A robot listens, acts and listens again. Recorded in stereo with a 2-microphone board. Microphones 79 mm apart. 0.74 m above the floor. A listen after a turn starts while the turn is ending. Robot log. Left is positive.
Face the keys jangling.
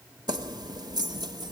note: The keys jangling: about 65° right or 115° right.
cmd yaw -65
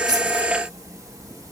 note: So it is at 50° right.
cmd yaw -50
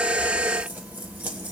note: The keys jangling is now 20° right.
cmd yaw -20
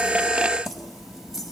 end: Facing the keys jangling.